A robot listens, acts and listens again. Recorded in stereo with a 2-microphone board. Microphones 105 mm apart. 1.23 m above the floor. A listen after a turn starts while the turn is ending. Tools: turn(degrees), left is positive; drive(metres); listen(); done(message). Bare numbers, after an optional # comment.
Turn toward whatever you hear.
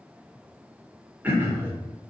# The throat clearing: about 15° right or 165° right.
turn(-15)
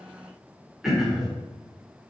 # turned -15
done("Facing the throat clearing, 1 to 2 m away.")